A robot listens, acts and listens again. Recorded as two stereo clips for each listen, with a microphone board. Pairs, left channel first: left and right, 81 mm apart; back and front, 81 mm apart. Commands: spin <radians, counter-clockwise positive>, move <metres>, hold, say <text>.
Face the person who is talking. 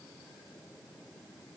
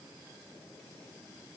hold
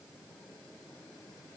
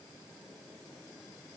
hold
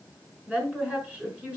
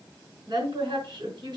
spin -0.26
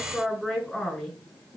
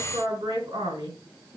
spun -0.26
say Found it: a woman speaking, straight ahead.